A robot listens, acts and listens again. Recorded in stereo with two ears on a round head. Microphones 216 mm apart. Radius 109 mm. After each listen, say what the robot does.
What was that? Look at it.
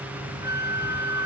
Turn 30° right.
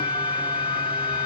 Turn 20° left.
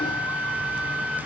Found it: a flute, straight ahead.